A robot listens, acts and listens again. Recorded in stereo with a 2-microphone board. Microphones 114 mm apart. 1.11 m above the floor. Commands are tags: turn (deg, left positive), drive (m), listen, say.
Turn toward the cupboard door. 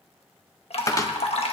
<turn deg="30"/>
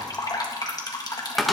<say>Found it: a cupboard door, straight ahead, 1 to 2 m away.</say>